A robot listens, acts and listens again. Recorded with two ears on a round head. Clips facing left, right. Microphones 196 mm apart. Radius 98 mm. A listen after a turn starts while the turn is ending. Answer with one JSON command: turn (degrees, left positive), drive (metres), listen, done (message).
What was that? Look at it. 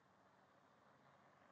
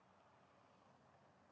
{"listen": true}
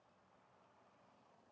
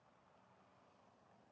{"listen": true}
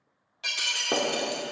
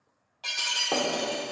{"turn": 25}
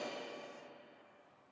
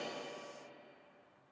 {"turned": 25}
{"listen": true}
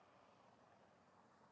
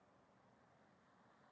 {"done": "I heard breaking glass, but can't make it out now. It was about straight ahead or 130° left."}